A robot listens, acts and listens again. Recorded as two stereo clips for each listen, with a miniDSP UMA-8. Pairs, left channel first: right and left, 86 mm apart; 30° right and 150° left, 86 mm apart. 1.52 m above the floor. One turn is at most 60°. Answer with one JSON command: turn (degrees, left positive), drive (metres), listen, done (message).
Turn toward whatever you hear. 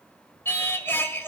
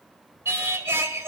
{"turn": -60}
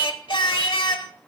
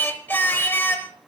{"turn": -60}
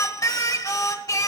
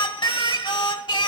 {"turn": -45}
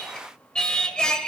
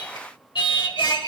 {"turn": -10}
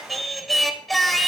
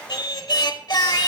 {"done": "Facing the singing."}